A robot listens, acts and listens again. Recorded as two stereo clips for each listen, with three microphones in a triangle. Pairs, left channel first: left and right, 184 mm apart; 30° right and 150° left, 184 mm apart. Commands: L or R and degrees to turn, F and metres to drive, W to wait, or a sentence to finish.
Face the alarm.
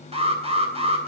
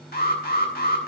R40
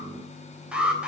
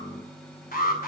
Found it: an alarm, straight ahead.